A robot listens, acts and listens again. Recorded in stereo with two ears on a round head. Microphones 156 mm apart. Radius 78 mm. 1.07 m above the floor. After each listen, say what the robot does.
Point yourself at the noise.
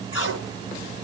Turn 90° left.
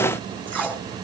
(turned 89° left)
Facing the tape being pulled.